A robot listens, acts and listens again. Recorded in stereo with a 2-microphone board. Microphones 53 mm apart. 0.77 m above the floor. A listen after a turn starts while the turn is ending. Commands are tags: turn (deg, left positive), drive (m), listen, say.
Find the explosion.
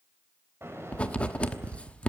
<turn deg="-55"/>
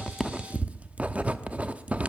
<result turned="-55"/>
<listen/>
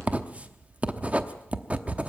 <say>I heard an explosion, but can't make it out now. It was about straight ahead or 70° right.</say>